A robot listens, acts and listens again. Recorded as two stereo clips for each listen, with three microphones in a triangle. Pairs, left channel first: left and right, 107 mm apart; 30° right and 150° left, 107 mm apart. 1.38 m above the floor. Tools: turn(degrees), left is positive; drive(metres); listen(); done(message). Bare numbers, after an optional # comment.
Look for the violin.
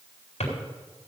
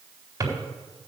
listen()
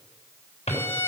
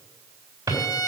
# The violin: 25° left.
turn(25)
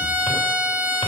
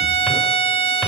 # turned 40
# The violin is now 15° right.
turn(-15)
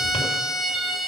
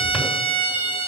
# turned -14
done("Facing the violin, 1 to 2 m away.")